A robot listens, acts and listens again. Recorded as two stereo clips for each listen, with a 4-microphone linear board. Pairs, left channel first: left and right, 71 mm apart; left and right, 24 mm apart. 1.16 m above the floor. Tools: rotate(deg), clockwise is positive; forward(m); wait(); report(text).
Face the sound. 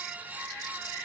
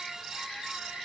wait()
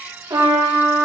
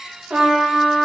rotate(70)
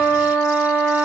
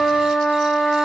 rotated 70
rotate(15)
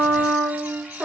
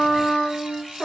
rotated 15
report("Found it: a trumpet, straight ahead.")